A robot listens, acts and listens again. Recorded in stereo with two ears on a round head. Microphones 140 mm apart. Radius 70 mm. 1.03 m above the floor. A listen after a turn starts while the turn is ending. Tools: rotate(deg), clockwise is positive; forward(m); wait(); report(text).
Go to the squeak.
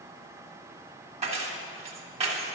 wait()
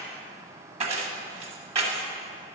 wait()
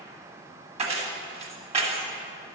report("I can't make out a squeak, only keys jangling.")